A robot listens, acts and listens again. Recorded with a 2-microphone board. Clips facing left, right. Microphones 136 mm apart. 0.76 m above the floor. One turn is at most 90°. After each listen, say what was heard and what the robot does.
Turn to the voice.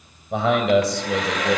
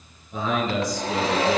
Turn 90° left.
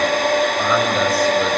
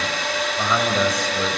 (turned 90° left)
Found it: a man speaking, straight ahead, over 4 m away.